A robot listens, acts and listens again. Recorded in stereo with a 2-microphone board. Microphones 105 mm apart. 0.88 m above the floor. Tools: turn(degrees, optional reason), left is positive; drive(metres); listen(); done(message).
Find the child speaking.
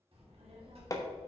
turn(degrees=-60, reason="The child speaking: about 60° right or 120° right.")
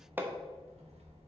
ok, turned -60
turn(degrees=-80, reason="So it is at 80° right.")
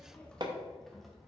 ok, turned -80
done("Found it: a child speaking, straight ahead, 1 to 2 m away.")